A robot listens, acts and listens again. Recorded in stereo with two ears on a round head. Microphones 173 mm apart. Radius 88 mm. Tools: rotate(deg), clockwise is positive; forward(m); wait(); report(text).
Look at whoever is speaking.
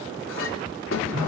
wait()
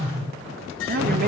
wait()
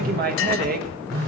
rotate(50)
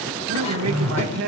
rotate(80)
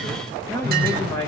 rotate(-15)
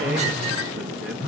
wait()
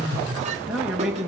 report("Facing the man speaking, 1 to 2 m away.")